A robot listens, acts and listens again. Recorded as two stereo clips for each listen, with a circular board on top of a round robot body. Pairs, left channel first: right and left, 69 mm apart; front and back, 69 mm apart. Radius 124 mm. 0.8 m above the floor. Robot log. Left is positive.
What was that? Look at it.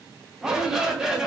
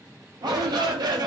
note: The shout: 170° left.
cmd yaw +170
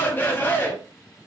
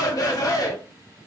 note: The shout is now 30° right.
cmd yaw -30
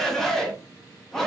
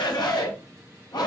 end: Facing the shout.